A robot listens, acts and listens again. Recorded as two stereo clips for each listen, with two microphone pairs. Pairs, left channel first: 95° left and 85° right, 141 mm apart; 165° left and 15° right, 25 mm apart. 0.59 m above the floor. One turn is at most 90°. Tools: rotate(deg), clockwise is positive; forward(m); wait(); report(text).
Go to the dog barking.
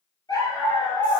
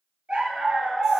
rotate(-25)
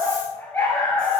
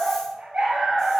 rotate(-15)
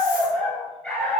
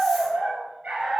forward(1.0)
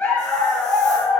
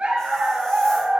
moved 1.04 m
rotate(-10)
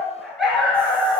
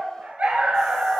forward(1.0)
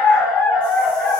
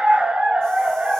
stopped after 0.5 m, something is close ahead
report("I am next to the dog barking.")